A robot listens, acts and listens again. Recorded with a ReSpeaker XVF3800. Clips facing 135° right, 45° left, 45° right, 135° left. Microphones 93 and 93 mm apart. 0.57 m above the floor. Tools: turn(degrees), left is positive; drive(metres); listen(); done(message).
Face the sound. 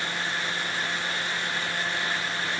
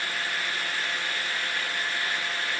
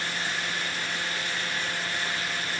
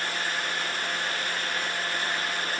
listen()
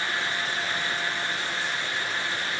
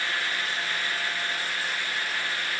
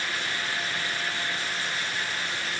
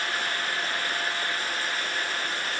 listen()
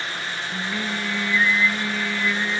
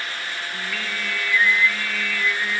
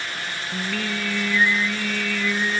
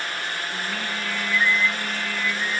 turn(degrees=-70)
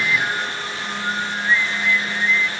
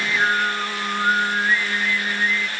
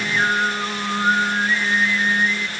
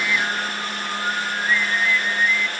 done("Facing the singing, 1 to 2 m away.")